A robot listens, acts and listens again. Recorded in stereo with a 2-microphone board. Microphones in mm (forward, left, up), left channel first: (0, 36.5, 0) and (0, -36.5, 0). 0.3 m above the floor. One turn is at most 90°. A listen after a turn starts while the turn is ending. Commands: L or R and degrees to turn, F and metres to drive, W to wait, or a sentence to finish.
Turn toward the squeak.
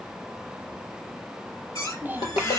L50
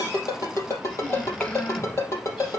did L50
W
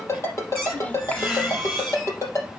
Found it: a squeak, straight ahead.